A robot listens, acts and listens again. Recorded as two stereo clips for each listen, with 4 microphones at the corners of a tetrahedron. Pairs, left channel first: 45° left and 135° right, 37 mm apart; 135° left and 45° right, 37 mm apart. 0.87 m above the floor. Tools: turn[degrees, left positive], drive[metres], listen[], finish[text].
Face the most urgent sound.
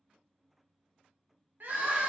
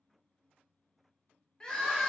Thought: The crying: 160° right.
Action: turn[-160]
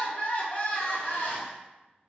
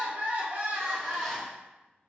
Action: finish[Found it: crying, straight ahead.]